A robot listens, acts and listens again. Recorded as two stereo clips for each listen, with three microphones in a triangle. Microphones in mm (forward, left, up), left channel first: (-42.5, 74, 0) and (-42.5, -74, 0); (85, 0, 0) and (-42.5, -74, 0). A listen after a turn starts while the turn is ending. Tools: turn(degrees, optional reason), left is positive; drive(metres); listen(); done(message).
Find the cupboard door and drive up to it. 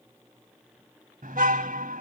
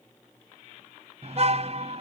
listen()
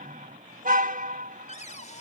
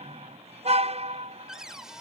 turn(degrees=125, reason="The cupboard door: 125° left.")
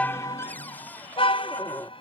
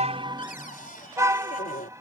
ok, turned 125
turn(degrees=10, reason="The cupboard door is now 10° left.")
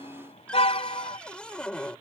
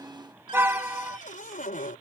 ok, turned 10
drive(metres=1.0)
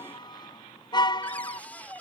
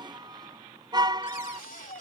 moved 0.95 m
turn(degrees=10, reason="The cupboard door is now 10° left.")
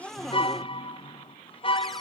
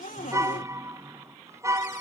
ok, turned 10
drive(metres=1.0)
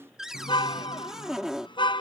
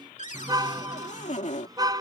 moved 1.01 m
drive(metres=1.0)
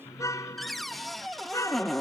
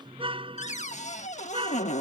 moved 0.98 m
drive(metres=1.0)
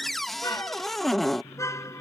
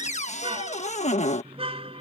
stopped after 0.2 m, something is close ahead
done("Arrived at the cupboard door, straight ahead.")